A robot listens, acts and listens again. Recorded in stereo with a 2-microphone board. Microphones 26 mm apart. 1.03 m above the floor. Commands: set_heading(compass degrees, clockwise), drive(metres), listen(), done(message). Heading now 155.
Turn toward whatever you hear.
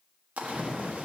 set_heading(245)
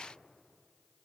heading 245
done("I heard a splash from this way, but can't make it out now.")